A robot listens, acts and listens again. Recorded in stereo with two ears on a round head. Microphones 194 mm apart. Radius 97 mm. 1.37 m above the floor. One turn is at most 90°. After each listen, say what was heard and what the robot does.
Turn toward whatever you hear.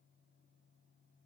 Keep listening.
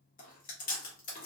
The chewing: about 40° left or 140° left. Turn 40° left.
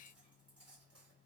Keep listening.
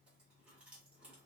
Keep listening.
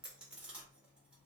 Found it: chewing, straight ahead.